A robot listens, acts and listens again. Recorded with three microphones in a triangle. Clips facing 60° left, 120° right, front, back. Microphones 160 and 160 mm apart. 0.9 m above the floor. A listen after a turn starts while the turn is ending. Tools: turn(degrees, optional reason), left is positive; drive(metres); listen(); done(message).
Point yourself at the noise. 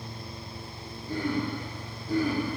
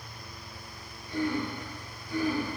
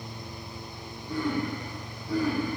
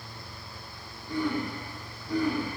turn(degrees=90, reason="The throat clearing: 90° left.")
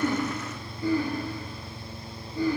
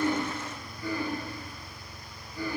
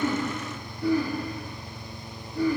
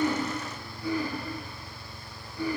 done("Facing the throat clearing.")